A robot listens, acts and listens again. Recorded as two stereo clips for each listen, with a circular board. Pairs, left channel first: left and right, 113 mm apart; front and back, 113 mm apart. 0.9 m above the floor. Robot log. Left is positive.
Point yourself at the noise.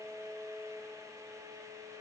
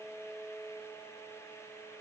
cmd idle
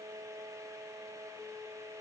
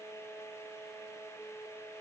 cmd idle
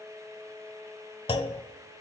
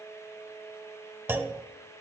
note: The clunk: 115° left.
cmd yaw +115
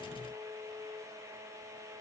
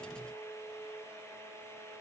end: Facing where the clunk came from. I can't hear it now.